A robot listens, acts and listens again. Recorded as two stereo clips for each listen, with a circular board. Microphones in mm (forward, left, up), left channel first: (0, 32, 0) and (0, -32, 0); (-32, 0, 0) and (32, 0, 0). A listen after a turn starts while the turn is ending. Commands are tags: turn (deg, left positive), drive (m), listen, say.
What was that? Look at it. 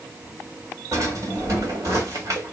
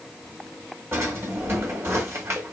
<turn deg="-50"/>
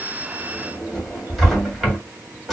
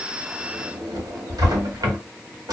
<say>Found it: a drawer, straight ahead.</say>